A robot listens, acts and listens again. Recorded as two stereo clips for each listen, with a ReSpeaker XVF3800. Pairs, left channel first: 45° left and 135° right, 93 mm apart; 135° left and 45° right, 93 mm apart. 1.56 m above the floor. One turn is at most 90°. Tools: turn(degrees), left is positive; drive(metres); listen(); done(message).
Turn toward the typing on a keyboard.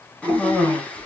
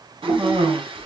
done("Facing the typing on a keyboard.")